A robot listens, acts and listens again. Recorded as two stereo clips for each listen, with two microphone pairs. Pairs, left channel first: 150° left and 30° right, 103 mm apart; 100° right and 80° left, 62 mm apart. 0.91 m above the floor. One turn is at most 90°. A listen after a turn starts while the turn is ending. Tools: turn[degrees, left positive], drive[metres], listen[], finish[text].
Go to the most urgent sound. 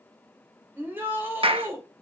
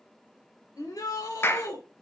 Thought: The shout: 100° right.
Action: turn[-90]
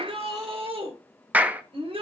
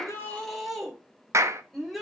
Thought: The shout is now 10° right.
Action: turn[-10]
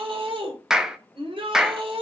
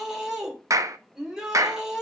Action: drive[1.0]
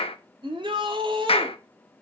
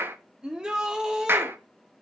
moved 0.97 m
Action: drive[1.0]
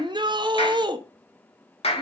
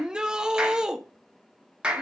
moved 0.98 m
Action: drive[1.0]
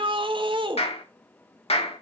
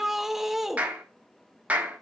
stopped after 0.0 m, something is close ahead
Action: finish[I am next to the shout.]